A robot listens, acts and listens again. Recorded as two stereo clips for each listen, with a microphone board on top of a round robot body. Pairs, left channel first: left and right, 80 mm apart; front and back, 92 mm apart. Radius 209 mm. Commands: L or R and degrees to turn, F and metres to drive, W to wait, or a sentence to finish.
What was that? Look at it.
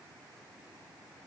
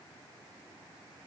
W
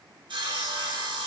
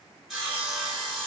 R95
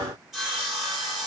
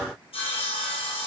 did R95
Found it: sawing, straight ahead.